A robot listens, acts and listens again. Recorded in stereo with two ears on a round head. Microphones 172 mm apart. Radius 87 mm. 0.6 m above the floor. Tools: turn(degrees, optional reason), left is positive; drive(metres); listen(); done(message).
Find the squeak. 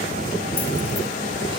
listen()
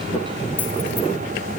listen()
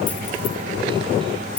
done("I can't make out a squeak.")